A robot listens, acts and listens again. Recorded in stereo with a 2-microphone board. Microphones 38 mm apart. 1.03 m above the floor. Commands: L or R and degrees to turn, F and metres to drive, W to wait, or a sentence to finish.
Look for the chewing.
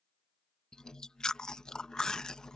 L20
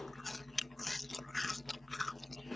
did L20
Facing the chewing.